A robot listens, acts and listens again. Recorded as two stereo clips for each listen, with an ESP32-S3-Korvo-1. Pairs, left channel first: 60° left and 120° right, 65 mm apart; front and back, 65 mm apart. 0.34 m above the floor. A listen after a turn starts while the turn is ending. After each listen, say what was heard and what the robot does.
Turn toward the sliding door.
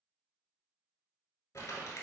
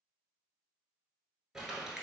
Keep listening.
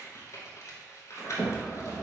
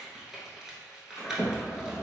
The sliding door: 45° left. Turn 45° left.
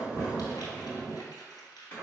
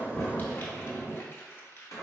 Found it: a sliding door, straight ahead.